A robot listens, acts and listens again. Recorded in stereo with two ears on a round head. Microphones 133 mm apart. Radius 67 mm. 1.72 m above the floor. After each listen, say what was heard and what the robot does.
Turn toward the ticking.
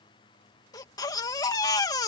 Keep listening.
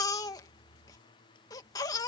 Keep listening.
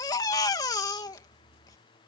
I can't make out ticking to turn to.